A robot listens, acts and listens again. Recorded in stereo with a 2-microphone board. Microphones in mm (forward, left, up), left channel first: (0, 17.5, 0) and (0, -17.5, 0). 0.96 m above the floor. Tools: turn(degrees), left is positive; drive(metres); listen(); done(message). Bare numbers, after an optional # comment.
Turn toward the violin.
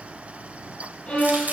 # The violin: about 25° left or 155° left.
turn(25)
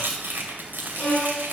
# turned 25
# So it is at 135° left.
turn(135)
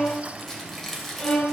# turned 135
# The violin is now 20° left.
turn(20)
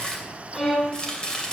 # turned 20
done("Found it: a violin, straight ahead, over 4 m away.")